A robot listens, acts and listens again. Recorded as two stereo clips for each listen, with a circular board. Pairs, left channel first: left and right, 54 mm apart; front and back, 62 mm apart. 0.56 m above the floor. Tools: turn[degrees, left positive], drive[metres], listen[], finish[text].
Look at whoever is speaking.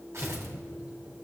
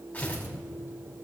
Action: listen[]
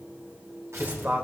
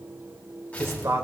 Thought: The man speaking: 145° right.
Action: turn[-145]
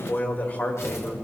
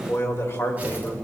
Thought: The man speaking is now 40° left.
Action: turn[40]
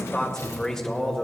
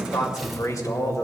Thought: The man speaking is now 10° left.
Action: turn[10]
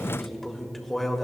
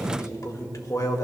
Action: finish[Found it: a man speaking, straight ahead.]